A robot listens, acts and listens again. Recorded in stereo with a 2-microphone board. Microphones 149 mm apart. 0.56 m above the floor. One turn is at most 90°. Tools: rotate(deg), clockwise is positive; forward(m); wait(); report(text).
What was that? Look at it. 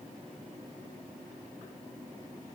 wait()
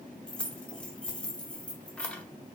rotate(-30)
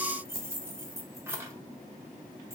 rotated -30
rotate(20)
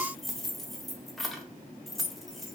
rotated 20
report("Found it: keys jangling, straight ahead.")